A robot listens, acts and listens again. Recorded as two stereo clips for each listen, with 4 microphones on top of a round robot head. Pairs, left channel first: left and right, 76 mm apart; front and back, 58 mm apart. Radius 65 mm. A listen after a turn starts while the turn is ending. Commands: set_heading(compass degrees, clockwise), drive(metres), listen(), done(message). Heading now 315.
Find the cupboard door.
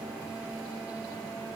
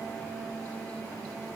listen()
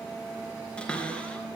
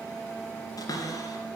set_heading(300)
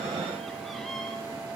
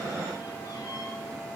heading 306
listen()
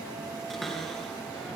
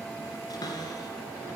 done("Found it: a cupboard door, straight ahead, 2 to 4 m away.")